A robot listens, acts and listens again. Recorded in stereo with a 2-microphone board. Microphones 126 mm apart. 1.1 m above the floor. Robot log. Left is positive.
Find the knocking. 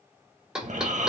cmd yaw -30
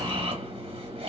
cmd idle
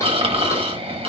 cmd idle
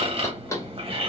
note: So it is at 25° left.
cmd yaw +25
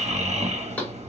cmd idle
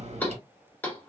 note: The knocking is now 15° left.
cmd yaw +15
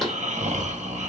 cmd idle
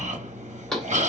end: Found it: knocking, straight ahead, under 1 m away.